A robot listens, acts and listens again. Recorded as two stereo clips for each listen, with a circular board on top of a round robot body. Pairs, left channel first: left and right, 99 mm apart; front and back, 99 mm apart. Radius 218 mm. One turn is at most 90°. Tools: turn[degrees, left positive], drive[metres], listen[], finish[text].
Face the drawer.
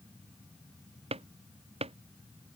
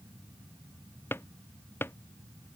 Thought: The drawer: 70° right.
Action: turn[-70]
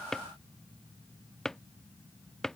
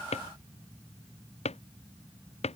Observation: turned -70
Action: finish[Found it: a drawer, straight ahead.]